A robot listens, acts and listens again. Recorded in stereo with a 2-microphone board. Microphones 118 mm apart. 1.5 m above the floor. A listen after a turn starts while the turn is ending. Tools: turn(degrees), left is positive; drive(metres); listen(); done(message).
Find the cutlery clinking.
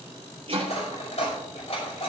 turn(degrees=65)
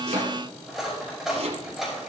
done("Facing the cutlery clinking.")